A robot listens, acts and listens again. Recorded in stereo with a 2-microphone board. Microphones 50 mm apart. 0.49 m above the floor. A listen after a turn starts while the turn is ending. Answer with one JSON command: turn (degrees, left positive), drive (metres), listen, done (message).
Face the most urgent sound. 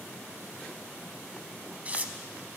{"listen": true}
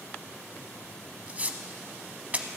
{"listen": true}
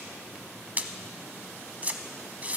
{"done": "I can't make out anything urgent, only tearing paper."}